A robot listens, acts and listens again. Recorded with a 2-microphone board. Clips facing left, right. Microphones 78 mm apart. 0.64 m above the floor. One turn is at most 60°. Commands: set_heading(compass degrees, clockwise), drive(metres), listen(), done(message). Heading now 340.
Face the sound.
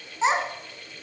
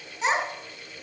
set_heading(310)
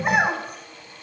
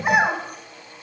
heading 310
done("Found it: a child speaking, straight ahead, over 4 m away.")